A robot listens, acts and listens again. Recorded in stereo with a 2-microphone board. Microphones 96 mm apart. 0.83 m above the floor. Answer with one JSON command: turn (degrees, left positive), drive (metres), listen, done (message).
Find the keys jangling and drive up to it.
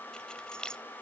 {"turn": 30}
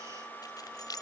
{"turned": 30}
{"turn": 140}
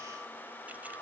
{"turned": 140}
{"listen": true}
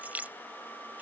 {"turn": -15}
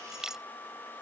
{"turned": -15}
{"drive": 1.0}
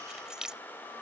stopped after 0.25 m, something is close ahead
{"done": "Blocked. The keys jangling is further on, straight ahead."}